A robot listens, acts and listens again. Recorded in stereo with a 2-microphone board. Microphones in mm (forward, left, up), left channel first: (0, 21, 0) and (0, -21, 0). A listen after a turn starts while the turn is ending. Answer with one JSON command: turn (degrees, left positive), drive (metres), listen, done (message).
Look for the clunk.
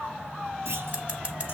{"turn": -90}
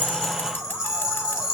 {"done": "I heard a clunk from this way, but can't make it out now."}